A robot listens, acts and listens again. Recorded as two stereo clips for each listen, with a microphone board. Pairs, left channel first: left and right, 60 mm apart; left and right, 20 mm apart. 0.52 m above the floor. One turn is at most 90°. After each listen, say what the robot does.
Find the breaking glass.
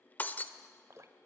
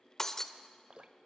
Turn 25° left.
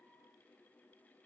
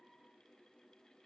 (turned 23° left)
Keep listening.
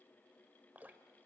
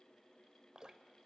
I heard breaking glass, but can't make it out now. It was about straight ahead or 130° left.